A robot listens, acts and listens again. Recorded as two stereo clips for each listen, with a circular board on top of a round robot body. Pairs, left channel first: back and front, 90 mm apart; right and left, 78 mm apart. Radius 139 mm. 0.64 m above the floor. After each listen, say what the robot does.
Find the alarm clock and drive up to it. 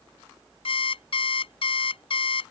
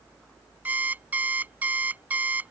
Turn 160° left.
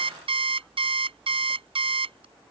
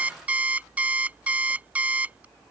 Turn 15° left.
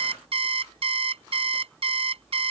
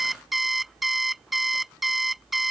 Drive 1.0 m forward.
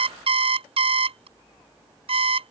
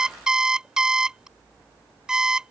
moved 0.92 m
Turn 10° left.
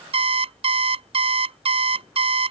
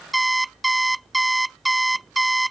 Drive 1.0 m forward.
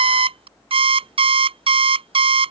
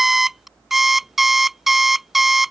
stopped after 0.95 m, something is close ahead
Arrived at the alarm clock, straight ahead.